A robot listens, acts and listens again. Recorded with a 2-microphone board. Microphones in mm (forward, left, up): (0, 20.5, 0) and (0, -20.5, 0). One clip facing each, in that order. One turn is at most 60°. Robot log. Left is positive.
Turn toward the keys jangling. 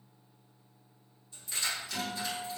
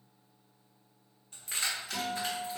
note: The keys jangling: about 65° right or 115° right.
cmd yaw -60
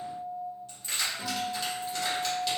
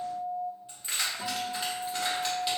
note: So it is at 20° right.
cmd yaw -20
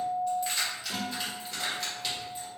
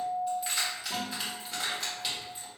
note: The keys jangling is now 10° right.
cmd yaw -10
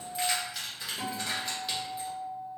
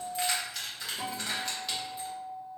end: Facing the keys jangling, 1 to 2 m away.